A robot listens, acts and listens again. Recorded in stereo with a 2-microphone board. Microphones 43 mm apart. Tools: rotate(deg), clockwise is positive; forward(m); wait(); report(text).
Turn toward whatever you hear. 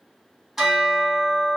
rotate(30)
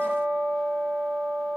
rotate(140)
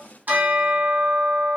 rotate(45)
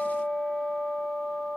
rotate(15)
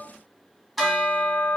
report("Found it: a bell, straight ahead.")